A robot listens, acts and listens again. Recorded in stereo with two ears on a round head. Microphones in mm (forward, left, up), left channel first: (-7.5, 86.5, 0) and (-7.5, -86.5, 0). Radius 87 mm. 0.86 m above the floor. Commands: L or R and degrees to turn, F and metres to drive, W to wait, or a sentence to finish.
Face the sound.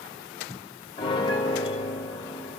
L25
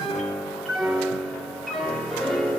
Facing the piano.